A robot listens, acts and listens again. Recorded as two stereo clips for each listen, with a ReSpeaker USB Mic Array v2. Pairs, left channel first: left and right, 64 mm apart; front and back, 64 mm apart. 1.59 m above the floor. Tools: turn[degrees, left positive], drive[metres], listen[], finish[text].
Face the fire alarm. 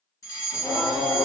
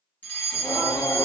Thought: The fire alarm: 65° left.
Action: turn[65]
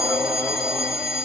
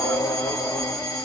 Action: finish[Found it: a fire alarm, straight ahead.]